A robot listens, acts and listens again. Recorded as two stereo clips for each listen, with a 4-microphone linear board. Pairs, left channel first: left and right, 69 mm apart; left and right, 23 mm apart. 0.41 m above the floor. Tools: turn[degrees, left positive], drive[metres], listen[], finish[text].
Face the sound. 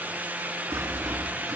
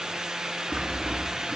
Thought: The sawing: about 50° right or 130° right.
Action: turn[-50]
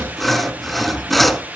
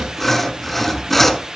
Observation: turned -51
Action: finish[Facing the sawing.]